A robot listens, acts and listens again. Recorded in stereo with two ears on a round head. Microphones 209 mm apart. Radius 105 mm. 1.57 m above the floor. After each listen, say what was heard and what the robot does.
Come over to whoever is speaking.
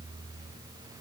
Keep listening.
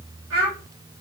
The child speaking: about 65° right or 115° right. Turn 65° right.
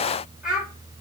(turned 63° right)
Drive 1.0 m forward.
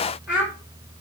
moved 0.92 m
Drive 1.0 m forward.
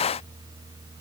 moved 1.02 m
Keep listening.
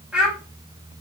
Drive 1.0 m forward.
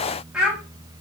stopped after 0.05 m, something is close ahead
I am next to the child speaking.